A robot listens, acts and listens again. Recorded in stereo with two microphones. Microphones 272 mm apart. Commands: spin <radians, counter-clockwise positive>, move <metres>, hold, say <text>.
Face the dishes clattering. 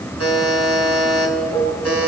spin 0.26
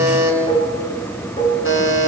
spin 2.71
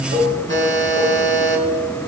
spin -0.52
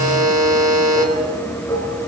spin 0.26
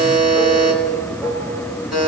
say Facing the dishes clattering.